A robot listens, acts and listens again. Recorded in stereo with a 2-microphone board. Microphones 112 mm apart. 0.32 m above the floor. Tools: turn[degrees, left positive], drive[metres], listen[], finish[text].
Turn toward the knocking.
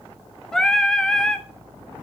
Action: listen[]
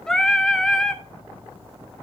Action: listen[]
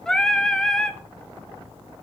Action: finish[I can't make out knocking, only singing.]